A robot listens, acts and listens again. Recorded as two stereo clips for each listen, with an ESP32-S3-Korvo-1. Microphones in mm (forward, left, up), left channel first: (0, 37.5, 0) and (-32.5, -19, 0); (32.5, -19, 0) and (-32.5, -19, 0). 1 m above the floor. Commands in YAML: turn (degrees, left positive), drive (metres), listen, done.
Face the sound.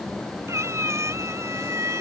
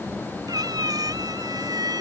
turn: -165
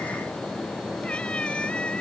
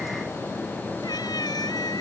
listen: true
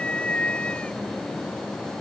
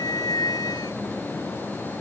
turn: -15
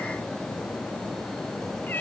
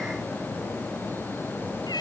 listen: true
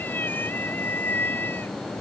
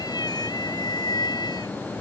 done: "Found it: a cat meowing, straight ahead."